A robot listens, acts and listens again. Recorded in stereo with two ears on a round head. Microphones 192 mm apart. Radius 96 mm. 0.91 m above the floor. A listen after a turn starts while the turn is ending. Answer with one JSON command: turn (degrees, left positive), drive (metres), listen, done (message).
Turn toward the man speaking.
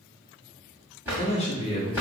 {"turn": 25}
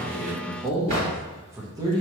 {"turn": -20}
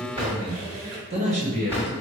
{"turn": -40}
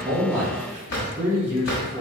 {"turn": -10}
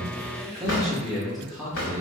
{"done": "Found it: a man speaking, straight ahead, 1 to 2 m away."}